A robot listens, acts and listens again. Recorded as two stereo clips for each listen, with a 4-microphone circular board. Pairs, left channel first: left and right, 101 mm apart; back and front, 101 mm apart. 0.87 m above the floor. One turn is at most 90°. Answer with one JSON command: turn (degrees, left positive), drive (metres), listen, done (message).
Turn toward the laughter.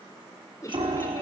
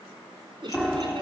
{"turn": 35}
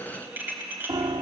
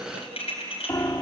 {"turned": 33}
{"listen": true}
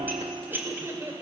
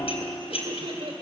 {"turn": -25}
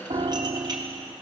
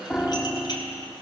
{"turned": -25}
{"listen": true}
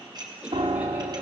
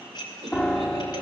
{"turn": -10}
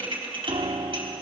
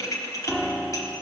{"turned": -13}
{"listen": true}
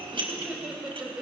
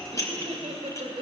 {"done": "Found it: laughter, straight ahead, over 4 m away."}